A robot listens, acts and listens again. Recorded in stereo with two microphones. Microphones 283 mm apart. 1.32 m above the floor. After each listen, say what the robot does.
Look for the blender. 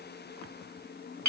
Keep listening.
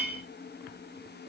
Keep listening.
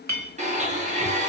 Turn 25° right.
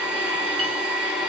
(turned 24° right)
Facing the blender, under 1 m away.